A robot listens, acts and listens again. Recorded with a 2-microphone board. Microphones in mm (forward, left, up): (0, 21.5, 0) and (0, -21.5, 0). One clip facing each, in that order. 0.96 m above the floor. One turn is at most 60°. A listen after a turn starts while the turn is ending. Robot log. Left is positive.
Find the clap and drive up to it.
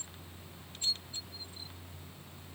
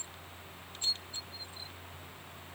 cmd idle
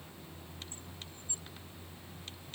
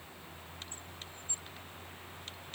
cmd idle
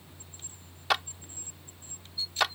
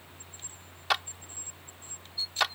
cmd yaw +30
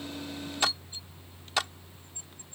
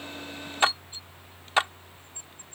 note: So it is at 35° right.
cmd yaw -35
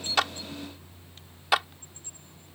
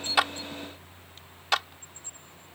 cmd fwd 1.0
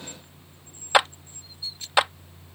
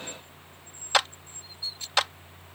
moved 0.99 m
note: The clap is now 15° left.
cmd yaw +15
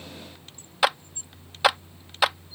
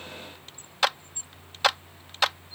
cmd fwd 1.0
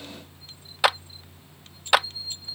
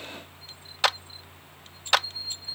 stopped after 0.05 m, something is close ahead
note: The clap is now 10° left.
cmd yaw +10
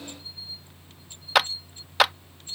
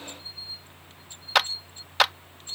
end: I am next to the clap.